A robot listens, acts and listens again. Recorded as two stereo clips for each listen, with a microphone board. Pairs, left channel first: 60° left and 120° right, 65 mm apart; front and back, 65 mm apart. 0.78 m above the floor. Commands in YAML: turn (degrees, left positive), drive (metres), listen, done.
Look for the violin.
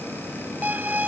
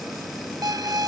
turn: 175
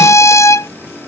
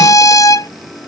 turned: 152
turn: 20
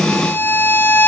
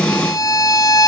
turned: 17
done: "Facing the violin."